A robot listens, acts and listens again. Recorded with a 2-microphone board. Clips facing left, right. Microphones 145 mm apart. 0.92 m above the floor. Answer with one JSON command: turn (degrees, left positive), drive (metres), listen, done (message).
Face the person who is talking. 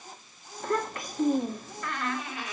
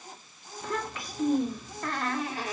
{"turn": 50}
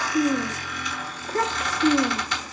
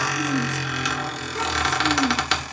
{"turn": 80}
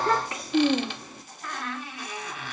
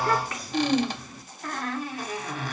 {"turn": 25}
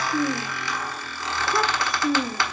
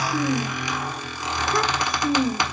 {"done": "Facing the child speaking, 2 to 4 m away."}